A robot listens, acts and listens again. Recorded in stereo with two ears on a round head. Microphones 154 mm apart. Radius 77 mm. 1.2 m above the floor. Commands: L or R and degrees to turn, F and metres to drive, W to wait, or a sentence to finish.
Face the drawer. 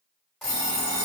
W
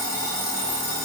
W
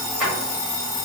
R30
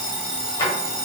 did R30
L25
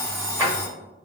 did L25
R20
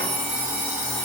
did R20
W
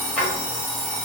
Found it: a drawer, straight ahead, 1 to 2 m away.